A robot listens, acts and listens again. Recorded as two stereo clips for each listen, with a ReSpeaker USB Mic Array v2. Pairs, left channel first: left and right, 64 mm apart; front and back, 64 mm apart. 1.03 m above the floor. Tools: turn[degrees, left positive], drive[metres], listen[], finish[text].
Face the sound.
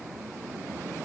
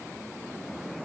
Action: listen[]
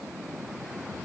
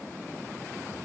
Action: listen[]
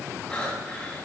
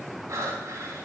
Thought: The breathing: 160° left.
Action: turn[160]
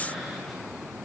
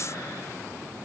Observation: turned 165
Action: listen[]
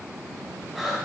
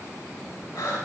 Action: finish[Found it: breathing, straight ahead, 2 to 4 m away.]